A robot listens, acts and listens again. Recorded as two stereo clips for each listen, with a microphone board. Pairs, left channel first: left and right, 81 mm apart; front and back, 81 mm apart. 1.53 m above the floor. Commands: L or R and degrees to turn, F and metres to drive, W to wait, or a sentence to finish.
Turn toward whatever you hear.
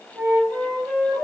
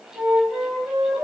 R140
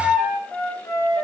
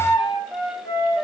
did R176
L35
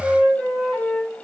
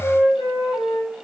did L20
L15
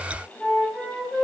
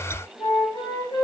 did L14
Found it: a flute, straight ahead, over 4 m away.